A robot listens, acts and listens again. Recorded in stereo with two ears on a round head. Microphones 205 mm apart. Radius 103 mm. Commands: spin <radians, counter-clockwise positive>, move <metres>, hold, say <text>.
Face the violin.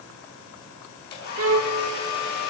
spin -1.13
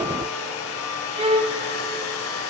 spin -0.44
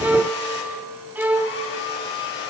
spin -0.17
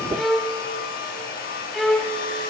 say Found it: a violin, straight ahead, 1 to 2 m away.